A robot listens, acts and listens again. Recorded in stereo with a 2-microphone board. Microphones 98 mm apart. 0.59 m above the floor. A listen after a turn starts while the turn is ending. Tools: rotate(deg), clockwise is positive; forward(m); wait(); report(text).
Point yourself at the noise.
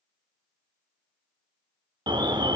rotate(60)
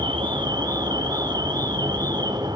rotate(55)
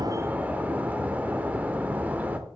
rotate(20)
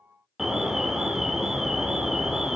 report("Found it: an alarm, straight ahead.")